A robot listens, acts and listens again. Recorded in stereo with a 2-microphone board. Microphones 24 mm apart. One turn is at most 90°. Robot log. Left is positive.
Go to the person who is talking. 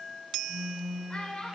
note: The child speaking: about 40° left or 140° left.
cmd yaw +40
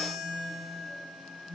cmd idle
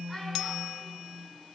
cmd idle
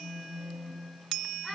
end: I heard a child speaking, but can't make it out now. It was about straight ahead or 100° left. I did not reach it.